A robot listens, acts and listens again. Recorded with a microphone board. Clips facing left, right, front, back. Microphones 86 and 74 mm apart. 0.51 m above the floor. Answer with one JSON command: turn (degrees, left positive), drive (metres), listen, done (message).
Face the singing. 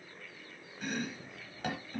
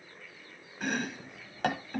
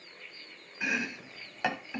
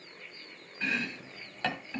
{"listen": true}
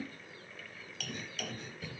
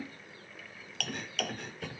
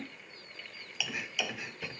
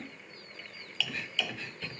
{"listen": true}
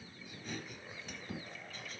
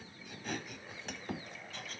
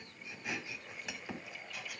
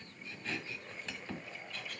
{"done": "I can't make out singing, only chopping."}